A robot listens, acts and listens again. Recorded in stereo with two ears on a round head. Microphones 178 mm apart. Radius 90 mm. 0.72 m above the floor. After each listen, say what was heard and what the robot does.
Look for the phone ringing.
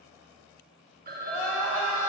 The phone ringing: about 50° right or 130° right. Turn 50° right.
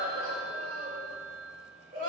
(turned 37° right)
So it is at 90° right. Turn 90° right.
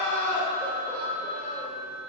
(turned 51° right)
The phone ringing is now 40° right. Turn 40° right.
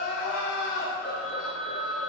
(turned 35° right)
Facing the phone ringing.